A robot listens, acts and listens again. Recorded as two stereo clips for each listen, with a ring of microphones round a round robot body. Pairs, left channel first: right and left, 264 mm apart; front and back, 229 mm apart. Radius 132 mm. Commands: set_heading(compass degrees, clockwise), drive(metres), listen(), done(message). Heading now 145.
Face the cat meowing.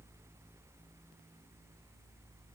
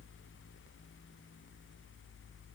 listen()
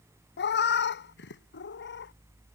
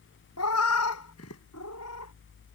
set_heading(185)
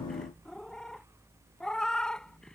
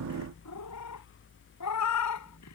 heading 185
done("Found it: a cat meowing, straight ahead.")